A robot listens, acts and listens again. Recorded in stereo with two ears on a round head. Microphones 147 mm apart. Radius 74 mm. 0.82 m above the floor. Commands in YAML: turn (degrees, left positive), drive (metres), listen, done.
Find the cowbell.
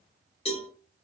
turn: 40
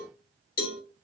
turn: 90
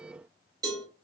turn: -25
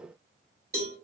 turn: -20
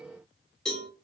done: "Facing the cowbell."